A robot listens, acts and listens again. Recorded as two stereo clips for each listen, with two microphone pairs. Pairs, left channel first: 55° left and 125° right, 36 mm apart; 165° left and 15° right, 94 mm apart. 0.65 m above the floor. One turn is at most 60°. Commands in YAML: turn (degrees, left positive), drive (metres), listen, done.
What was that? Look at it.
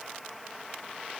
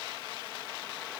listen: true
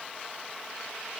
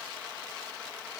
listen: true
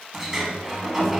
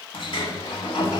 turn: 60
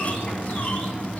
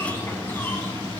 turn: 60
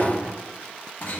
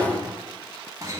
turn: 30
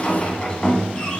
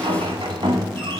done: "Facing the sliding door, 1 to 2 m away."